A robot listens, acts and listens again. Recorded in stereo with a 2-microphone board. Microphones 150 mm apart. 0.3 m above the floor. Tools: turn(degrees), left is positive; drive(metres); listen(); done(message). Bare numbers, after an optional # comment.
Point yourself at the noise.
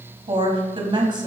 # The woman speaking: about 30° right or 150° right.
turn(-30)
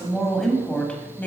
# So it is at 10° left.
turn(10)
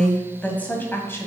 # The woman speaking is now 15° left.
turn(15)
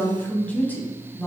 # The woman speaking is now 15° left.
turn(15)
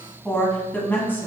# The woman speaking is now 15° left.
turn(15)
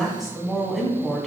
done("Facing the woman speaking, 2 to 4 m away.")